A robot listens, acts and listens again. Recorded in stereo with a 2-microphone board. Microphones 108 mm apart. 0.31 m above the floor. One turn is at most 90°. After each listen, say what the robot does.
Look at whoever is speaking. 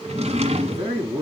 Turn 60° right.
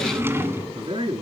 Turn 55° right.
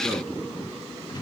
Keep listening.
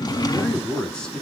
Turn 10° left.
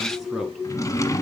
Facing the man speaking, 2 to 4 m away.